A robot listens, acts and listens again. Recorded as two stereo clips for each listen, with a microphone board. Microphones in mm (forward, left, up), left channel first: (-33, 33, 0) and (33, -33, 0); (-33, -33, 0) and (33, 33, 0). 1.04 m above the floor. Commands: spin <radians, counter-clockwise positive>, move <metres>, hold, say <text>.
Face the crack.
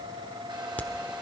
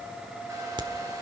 spin 1.13
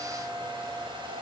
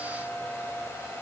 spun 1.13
say I heard a crack from this way, but can't make it out now.